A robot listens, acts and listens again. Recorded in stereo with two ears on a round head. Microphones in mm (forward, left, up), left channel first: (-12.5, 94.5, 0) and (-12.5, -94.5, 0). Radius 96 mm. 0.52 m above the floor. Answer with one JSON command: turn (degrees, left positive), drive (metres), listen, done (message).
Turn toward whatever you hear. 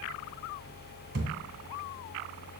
{"turn": -60}
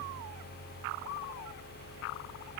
{"listen": true}
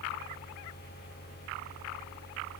{"done": "I heard a thud, but can't make it out now. It was about straight ahead or 60° right."}